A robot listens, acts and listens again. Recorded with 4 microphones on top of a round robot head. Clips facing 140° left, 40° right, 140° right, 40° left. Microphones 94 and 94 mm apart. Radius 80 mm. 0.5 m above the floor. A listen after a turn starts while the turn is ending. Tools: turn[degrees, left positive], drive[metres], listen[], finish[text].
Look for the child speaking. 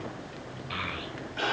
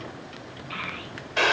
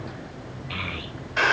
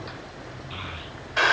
Thought: The child speaking: 135° right.
Action: turn[-135]
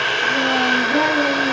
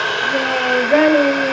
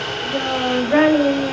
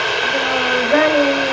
Thought: The child speaking is now 35° right.
Action: turn[-35]
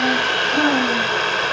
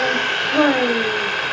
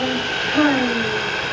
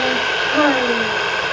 Thought: The child speaking is now 10° right.
Action: turn[-10]
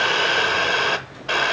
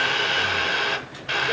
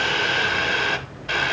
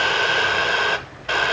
Action: listen[]
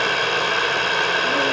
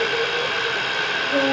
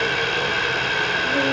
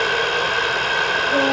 Action: listen[]
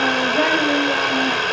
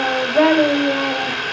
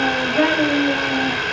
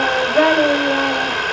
Action: finish[Found it: a child speaking, straight ahead.]